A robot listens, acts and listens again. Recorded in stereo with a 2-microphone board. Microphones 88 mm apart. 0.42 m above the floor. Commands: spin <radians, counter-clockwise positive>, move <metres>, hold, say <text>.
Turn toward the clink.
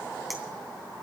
hold
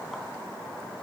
hold
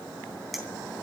spin 0.52
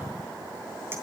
hold
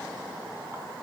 hold
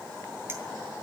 say I heard a clink, but can't make it out now. It was about 30° right or 150° left.